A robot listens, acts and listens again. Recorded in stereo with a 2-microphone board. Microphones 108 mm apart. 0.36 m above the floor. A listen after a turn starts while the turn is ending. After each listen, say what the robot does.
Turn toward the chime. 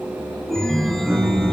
Turn 30° left.
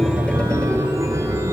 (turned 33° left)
Turn 30° right.
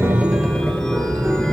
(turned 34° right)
Facing the chime.